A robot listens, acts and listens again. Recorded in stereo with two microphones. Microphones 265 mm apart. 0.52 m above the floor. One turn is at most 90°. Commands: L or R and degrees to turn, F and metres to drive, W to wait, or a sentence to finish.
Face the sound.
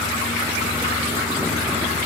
W
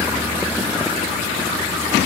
W
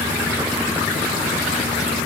I can't make out anything.